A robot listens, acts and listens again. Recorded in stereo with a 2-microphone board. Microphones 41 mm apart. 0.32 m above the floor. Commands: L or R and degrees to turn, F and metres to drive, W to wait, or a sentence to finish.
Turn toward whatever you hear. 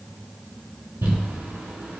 R90
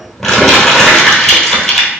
L10
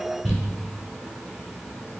Found it: crumpling, straight ahead, 1 to 2 m away.